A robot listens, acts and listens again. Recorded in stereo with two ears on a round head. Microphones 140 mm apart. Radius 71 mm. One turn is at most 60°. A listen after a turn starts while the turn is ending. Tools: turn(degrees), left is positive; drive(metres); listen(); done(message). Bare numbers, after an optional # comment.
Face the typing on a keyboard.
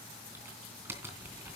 turn(-30)
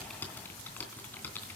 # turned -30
# So it is at 15° left.
turn(15)
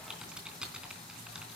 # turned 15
done("Found it: typing on a keyboard, straight ahead.")